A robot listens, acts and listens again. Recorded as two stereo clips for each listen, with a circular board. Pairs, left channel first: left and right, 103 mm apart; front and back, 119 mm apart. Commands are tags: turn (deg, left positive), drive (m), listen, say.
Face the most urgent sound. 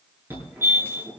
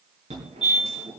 <turn deg="-160"/>
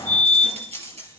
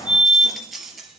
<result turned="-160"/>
<turn deg="-45"/>
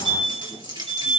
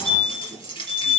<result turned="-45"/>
<say>Found it: a fire alarm, straight ahead.</say>